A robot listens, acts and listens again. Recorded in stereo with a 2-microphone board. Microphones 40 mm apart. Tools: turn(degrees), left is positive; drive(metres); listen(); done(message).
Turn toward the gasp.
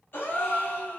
turn(degrees=70)
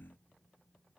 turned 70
listen()
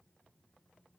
done("I heard a gasp, but can't make it out now. It was about straight ahead or 40° left.")